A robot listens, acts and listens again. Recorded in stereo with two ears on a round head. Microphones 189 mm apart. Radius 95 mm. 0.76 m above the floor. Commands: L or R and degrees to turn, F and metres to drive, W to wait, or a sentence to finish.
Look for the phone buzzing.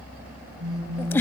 R90
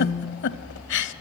L15
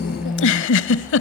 Facing the phone buzzing.